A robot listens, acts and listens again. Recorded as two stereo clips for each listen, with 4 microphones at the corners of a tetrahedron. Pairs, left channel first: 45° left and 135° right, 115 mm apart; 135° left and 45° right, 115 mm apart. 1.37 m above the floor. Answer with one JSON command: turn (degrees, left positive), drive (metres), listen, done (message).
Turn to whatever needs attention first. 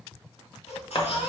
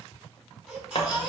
{"turn": 35}
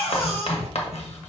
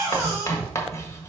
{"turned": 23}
{"turn": 15}
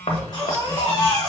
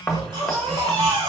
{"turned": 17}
{"done": "Found it: a baby crying, straight ahead, 2 to 4 m away."}